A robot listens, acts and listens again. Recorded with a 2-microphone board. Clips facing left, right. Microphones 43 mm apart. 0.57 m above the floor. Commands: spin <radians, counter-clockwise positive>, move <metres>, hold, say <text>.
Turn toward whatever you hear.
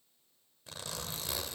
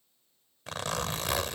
spin -1.22
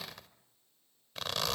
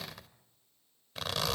say Found it: a zipper, straight ahead.